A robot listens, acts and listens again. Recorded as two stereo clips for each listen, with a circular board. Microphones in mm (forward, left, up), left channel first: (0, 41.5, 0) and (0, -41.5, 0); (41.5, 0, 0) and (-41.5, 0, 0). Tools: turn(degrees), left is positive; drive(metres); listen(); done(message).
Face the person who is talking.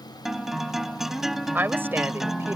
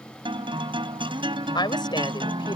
turn(degrees=-25)
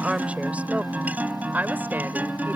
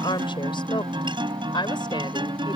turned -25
turn(degrees=-20)
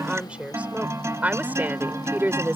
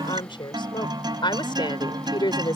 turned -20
turn(degrees=-25)
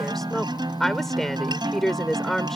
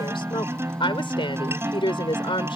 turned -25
done("Found it: a woman speaking, straight ahead.")